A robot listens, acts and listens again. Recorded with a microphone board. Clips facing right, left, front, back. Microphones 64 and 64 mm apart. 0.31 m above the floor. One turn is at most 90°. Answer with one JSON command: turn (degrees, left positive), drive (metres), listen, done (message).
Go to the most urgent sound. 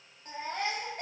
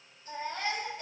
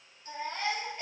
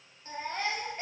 {"turn": -90}
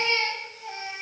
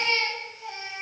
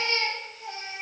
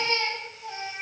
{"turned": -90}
{"drive": 1.0}
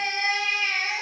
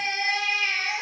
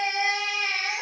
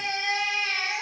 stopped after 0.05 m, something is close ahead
{"done": "Something is in my way. I am facing the baby crying but have not reached it."}